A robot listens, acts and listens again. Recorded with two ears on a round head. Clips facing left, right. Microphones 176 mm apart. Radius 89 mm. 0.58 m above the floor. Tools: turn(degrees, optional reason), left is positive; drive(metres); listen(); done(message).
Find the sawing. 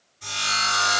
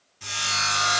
turn(degrees=-70, reason="The sawing: about 70° right or 110° right.")
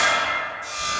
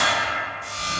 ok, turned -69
turn(degrees=-40, reason="So it is at 40° right.")
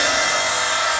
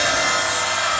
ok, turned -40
done("Found it: sawing, straight ahead.")